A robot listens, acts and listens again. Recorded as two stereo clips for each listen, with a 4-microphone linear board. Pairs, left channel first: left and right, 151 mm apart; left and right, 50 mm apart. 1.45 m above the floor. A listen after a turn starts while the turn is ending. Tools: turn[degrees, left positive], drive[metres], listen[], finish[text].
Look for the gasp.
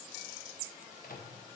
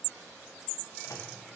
Action: listen[]
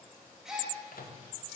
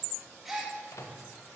Action: turn[-30]
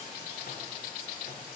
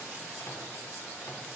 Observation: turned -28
Action: listen[]
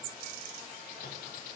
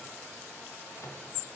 Action: finish[I heard a gasp, but can't make it out now. It was about 25° left or 150° right.]